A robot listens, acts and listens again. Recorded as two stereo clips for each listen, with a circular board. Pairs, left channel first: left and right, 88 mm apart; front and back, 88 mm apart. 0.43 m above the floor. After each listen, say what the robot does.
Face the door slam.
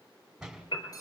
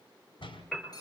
Turn 10° right.
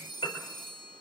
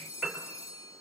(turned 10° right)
Facing where the door slam came from. I can't hear it now.